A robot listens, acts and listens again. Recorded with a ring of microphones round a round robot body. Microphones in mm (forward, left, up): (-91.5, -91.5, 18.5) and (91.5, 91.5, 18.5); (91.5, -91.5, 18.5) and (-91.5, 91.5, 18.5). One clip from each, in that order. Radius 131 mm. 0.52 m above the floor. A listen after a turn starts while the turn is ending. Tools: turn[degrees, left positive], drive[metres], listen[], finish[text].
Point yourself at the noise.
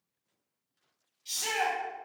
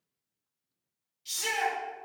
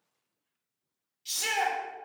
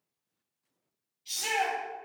Thought: The shout: 30° right.
Action: turn[-30]
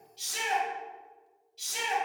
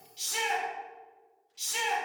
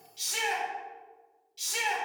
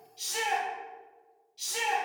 Thought: The shout is now 10° left.
Action: turn[10]
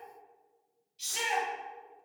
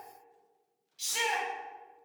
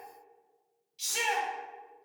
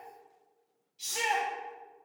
Action: finish[Facing the shout.]